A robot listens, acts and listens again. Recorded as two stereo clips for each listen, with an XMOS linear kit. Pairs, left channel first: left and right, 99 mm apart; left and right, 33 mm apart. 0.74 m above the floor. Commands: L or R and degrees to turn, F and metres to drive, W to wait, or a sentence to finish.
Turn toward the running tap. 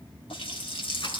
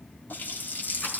L90
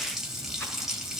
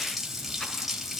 Facing the running tap.